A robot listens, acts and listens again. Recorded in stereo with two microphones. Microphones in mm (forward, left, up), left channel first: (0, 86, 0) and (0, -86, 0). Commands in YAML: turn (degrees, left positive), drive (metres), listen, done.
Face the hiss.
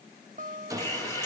turn: 20
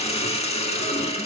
turn: 145
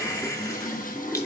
turn: 20
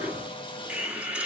turn: -10
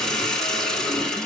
done: "Found it: a hiss, straight ahead."